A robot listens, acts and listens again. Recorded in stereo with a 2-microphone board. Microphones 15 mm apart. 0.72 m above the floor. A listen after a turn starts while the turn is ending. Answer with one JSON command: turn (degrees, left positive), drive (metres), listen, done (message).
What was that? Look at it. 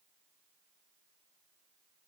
{"listen": true}
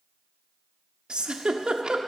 {"turn": -70}
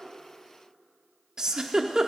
{"turn": -35}
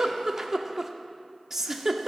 {"turn": -20}
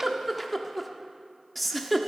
{"turn": 10}
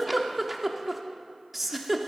{"done": "Found it: a giggle, straight ahead, under 1 m away."}